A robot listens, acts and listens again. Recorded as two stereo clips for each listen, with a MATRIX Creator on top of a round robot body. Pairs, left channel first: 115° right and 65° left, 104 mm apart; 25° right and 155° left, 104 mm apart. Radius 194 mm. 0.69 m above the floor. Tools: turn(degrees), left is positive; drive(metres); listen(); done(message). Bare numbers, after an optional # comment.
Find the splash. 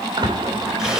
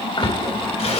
# The splash: 20° left.
turn(20)
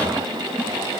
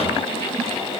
done("Facing where the splash came from. I can't hear it now.")